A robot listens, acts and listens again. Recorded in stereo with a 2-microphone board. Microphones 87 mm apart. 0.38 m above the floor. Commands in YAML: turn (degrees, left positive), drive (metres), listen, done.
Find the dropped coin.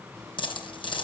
turn: 90
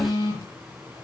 done: "Facing where the dropped coin came from. I can't hear it now."